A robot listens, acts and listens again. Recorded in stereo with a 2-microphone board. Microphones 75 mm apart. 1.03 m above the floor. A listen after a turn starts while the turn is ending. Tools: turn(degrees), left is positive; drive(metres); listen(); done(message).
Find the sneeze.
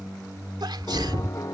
turn(degrees=-90)
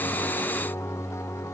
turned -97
done("Facing where the sneeze came from. I can't hear it now.")